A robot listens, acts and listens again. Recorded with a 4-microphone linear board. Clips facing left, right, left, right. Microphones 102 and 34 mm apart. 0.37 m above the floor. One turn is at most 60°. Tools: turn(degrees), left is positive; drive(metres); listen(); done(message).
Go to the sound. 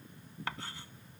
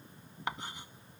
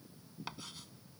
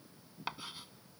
turn(degrees=-20)
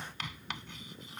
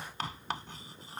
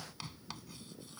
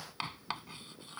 turn(degrees=-60)
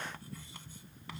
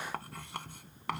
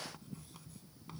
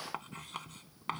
turn(degrees=-60)
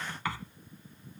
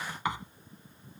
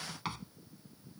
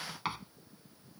turn(degrees=-20)
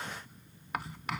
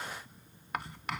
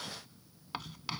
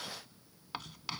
drive(metres=1.0)
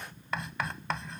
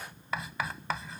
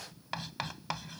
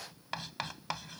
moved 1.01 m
drive(metres=1.0)
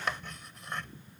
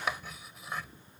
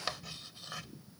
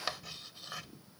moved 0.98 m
drive(metres=1.0)
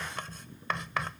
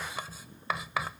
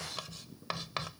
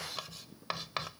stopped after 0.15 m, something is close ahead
turn(degrees=-10)
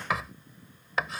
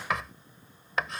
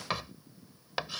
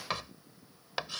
done("I am next to the writing.")